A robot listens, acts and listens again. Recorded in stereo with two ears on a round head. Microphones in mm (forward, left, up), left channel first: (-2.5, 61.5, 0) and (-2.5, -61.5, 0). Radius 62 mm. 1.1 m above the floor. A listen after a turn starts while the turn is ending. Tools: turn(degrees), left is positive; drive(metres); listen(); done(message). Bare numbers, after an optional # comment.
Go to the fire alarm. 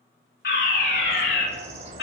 turn(90)
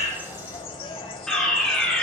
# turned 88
drive(1.0)
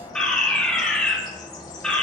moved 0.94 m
drive(1.0)
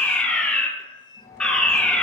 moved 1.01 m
# The fire alarm is now 10° left.
turn(10)
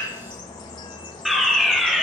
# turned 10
drive(1.0)
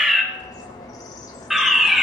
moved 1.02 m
drive(1.0)
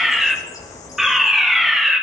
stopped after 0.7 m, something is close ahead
done("I am next to the fire alarm.")